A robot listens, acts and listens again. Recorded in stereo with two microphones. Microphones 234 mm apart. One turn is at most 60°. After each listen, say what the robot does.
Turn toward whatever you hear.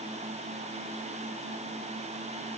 Keep listening.
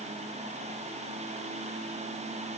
Keep listening.
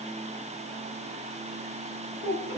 Turn 50° right.
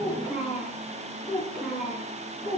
Found it: a child speaking, straight ahead, over 4 m away.